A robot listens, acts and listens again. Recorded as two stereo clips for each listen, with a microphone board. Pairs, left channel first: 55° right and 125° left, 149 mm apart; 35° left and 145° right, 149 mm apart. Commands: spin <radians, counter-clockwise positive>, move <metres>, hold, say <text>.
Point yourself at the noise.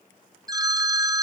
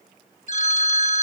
spin 1.13
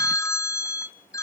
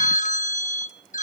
spin 0.17
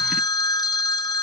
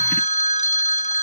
say Facing the phone ringing.